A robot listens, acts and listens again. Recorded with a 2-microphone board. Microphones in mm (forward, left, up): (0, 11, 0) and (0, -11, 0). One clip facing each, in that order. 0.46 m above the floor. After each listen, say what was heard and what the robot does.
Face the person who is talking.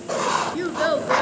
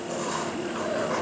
The child speaking: about 75° left or 105° left. Turn 75° left.
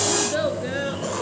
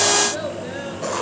So it is at 25° left. Turn 25° left.
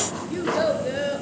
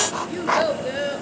The child speaking is now 10° right. Turn 10° right.
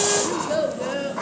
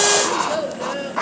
Found it: a child speaking, straight ahead, over 4 m away.